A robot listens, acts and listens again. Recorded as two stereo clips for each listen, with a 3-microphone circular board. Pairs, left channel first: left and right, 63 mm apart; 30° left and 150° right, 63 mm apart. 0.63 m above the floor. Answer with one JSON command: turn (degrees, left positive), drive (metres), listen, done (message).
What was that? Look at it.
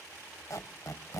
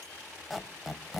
{"turn": 125}
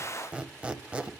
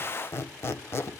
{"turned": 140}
{"turn": -20}
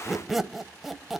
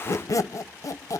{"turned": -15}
{"done": "Facing the squeak, 1 to 2 m away."}